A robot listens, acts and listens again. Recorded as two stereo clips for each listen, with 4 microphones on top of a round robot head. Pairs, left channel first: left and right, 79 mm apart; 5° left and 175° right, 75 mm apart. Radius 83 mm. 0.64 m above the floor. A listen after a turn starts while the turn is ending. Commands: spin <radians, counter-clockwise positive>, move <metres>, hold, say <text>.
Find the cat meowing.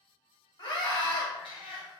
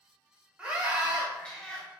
spin 1.31
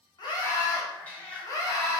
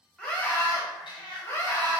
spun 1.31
spin 0.35
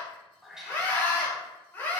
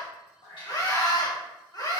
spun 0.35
say Facing the cat meowing.